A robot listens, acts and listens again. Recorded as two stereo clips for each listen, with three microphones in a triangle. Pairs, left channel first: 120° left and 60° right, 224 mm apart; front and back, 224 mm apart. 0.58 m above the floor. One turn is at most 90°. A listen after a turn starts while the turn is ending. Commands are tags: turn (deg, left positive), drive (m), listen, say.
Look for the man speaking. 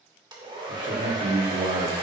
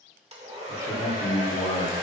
<turn deg="-40"/>
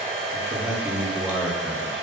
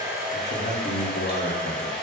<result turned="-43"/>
<turn deg="20"/>
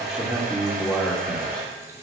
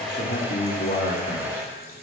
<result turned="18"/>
<turn deg="25"/>
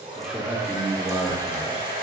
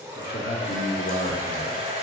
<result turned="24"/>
<turn deg="25"/>
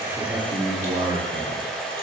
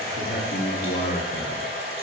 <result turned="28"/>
<say>Facing the man speaking.</say>